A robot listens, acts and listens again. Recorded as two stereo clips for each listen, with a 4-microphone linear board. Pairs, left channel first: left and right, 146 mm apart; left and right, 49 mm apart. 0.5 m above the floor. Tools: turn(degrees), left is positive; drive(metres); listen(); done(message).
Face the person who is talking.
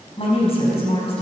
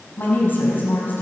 turn(degrees=45)
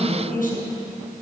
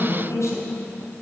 turn(degrees=85)
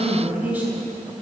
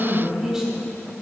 turn(degrees=-15)
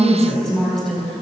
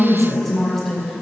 done("Facing the woman speaking, 2 to 4 m away.")